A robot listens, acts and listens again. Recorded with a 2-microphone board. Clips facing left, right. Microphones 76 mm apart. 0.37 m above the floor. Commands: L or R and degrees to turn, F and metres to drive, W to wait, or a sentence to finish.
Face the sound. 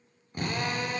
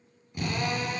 L45
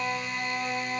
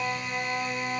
Found it: a drill, straight ahead, over 4 m away.